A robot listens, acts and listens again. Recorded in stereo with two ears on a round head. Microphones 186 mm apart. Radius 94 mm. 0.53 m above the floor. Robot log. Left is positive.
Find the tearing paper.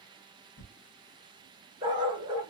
note: The tearing paper: about 30° left or 150° left.
cmd yaw +30
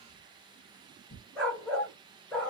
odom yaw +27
note: So it is at 125° left.
cmd yaw +125
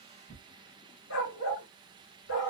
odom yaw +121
end: Found it: tearing paper, straight ahead, 1 to 2 m away.